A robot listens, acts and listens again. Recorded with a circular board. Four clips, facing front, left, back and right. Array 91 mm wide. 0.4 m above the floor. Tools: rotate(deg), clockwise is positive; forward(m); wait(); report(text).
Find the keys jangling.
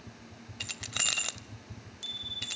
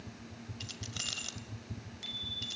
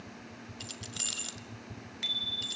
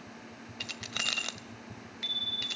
rotate(45)
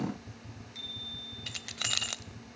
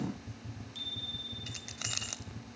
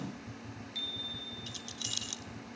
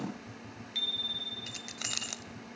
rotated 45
report("Facing the keys jangling, 1 to 2 m away.")